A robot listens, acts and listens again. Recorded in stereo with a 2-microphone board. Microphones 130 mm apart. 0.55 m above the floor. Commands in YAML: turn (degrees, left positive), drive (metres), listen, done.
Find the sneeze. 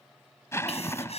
turn: 55
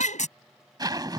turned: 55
turn: 75
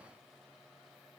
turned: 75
done: "Facing where the sneeze came from. I can't hear it now."